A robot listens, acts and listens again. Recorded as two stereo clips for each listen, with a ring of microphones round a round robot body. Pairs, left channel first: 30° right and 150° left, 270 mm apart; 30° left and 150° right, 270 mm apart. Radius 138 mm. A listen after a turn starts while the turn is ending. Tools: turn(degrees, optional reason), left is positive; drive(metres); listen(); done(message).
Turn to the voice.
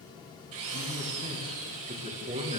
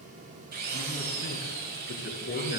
turn(degrees=85, reason="The man speaking: 85° left.")
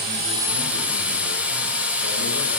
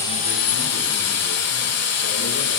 listen()
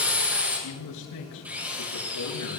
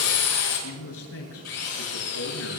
turn(degrees=-10, reason="The man speaking is now 10° right.")
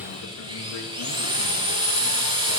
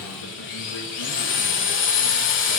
listen()
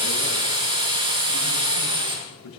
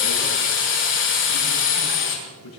done("Facing the man speaking, over 4 m away.")